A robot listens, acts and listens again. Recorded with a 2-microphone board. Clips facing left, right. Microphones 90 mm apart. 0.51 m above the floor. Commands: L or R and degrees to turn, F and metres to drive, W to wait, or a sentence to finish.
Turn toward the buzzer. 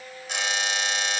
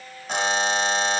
R40
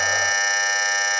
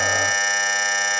Facing the buzzer.